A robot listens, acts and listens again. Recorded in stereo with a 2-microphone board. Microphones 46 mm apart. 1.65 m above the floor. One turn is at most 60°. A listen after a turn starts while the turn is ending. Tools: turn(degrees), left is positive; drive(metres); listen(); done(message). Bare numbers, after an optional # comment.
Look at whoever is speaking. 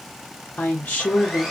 # The woman speaking: about 30° left or 150° left.
turn(30)
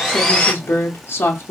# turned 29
# So it is at 120° left.
turn(60)
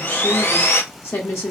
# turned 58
# The woman speaking is now 60° left.
turn(60)
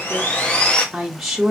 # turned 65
done("Found it: a woman speaking, straight ahead.")